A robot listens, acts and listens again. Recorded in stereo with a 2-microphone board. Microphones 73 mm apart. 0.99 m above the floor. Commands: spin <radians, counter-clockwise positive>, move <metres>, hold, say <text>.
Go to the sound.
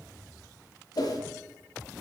spin 1.05
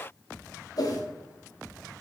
spin 0.96
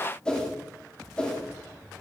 spin 0.17
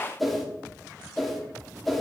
move 1.0
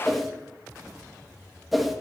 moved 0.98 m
move 1.0
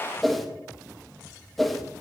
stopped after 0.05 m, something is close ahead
say Arrived at the whoosh, straight ahead.